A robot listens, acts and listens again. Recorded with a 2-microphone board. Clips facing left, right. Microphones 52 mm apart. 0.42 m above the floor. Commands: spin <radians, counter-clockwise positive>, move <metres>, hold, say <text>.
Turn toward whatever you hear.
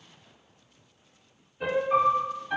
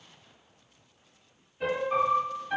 spin 0.52
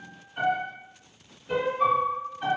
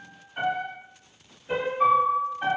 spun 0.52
spin -0.44
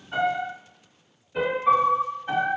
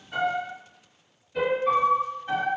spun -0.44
spin 0.35
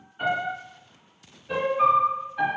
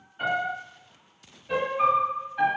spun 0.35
say Found it: a piano, straight ahead.